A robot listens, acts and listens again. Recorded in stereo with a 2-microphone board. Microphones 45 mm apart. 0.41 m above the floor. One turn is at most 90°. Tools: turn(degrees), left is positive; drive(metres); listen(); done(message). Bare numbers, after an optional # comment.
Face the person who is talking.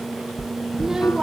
turn(-30)
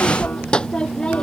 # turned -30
# So it is at 20° left.
turn(20)
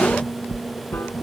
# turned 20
listen()
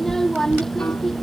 # The child speaking is now 10° left.
turn(10)
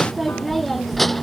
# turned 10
done("Found it: a child speaking, straight ahead.")